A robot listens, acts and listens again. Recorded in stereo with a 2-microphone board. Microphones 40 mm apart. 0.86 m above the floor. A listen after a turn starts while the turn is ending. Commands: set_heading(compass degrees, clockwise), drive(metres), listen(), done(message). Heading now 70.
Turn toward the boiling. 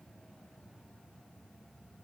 listen()
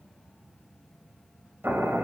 set_heading(160)
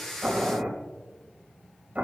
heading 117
set_heading(157)
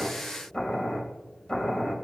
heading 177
set_heading(157)
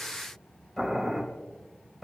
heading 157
done("Found it: boiling, straight ahead, 2 to 4 m away.")